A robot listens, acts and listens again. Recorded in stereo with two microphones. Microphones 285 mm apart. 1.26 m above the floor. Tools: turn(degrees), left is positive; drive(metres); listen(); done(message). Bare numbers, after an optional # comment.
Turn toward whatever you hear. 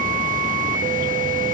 listen()
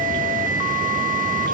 listen()
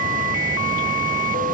done("I can't make out anything to turn to.")